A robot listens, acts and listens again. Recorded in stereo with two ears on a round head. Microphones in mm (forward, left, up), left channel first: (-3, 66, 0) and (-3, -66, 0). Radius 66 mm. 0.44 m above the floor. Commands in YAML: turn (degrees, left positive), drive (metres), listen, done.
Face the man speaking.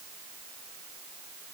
listen: true
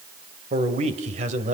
turn: -50
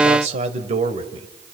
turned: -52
turn: -40
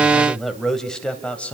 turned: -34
turn: 10
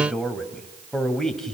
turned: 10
done: "Found it: a man speaking, straight ahead."